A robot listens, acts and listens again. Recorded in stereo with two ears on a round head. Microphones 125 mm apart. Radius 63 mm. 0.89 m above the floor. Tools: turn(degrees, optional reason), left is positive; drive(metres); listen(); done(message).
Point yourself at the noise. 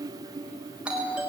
turn(degrees=-30)
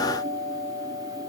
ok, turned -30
turn(degrees=20, reason="So it is at 20° left.")
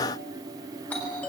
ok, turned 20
turn(degrees=10, reason="The doorbell is now 10° left.")
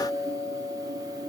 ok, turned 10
done("Facing the doorbell, over 4 m away.")